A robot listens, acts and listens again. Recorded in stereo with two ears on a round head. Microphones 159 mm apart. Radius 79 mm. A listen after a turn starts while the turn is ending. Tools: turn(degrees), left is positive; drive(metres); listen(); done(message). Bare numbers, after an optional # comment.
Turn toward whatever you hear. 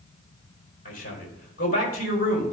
# The man speaking: about 50° left or 130° left.
turn(50)
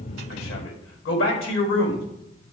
# So it is at 80° left.
turn(80)
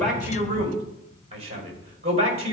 # The man speaking is now 35° right.
turn(-35)
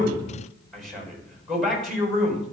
done("Found it: a man speaking, straight ahead, over 4 m away.")